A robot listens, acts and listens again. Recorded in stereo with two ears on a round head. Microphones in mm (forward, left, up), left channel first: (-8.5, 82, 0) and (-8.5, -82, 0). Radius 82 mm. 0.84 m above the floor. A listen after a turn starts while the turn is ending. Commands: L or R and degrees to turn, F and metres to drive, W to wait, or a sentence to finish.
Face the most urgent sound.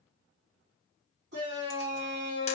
R65
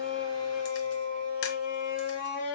R10
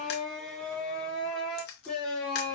Facing the shout.